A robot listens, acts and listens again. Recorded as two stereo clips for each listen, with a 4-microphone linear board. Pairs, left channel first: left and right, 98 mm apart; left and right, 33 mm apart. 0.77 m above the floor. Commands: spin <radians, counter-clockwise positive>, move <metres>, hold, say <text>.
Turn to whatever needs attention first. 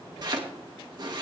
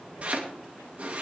hold
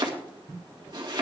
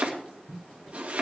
hold
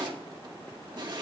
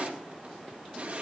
say I can't make out anything urgent to turn to.